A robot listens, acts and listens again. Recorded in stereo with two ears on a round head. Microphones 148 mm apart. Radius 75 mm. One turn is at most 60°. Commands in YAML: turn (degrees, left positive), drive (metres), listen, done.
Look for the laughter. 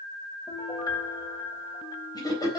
turn: 25
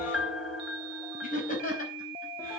turn: 60
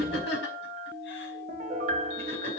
turn: 60
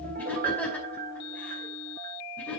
turn: 10
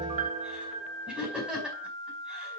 done: "Found it: laughter, straight ahead."